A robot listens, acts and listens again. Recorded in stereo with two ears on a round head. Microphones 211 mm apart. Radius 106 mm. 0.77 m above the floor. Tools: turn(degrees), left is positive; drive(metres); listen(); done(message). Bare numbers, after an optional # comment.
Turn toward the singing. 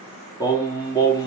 # The singing: about 15° left or 165° left.
turn(15)
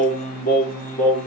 # The singing: about 35° left or 145° left.
turn(35)
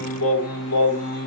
# So it is at 110° left.
turn(110)
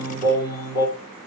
# The singing is now 10° right.
turn(-10)
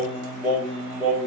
done("Facing the singing.")